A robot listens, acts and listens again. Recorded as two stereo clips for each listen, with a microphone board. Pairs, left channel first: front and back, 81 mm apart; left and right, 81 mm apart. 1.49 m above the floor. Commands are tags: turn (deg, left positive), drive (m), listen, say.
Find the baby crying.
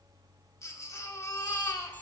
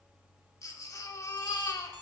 <turn deg="45"/>
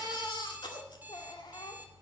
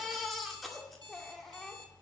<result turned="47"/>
<say>Facing the baby crying, 2 to 4 m away.</say>